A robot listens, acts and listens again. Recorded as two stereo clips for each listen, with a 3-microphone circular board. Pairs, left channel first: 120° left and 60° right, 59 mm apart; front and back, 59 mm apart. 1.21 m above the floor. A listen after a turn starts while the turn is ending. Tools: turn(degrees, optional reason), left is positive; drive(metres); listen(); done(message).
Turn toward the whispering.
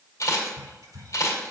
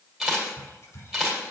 turn(degrees=-35, reason="The whispering: 35° right.")
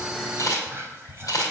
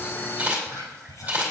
done("Found it: whispering, straight ahead, 2 to 4 m away.")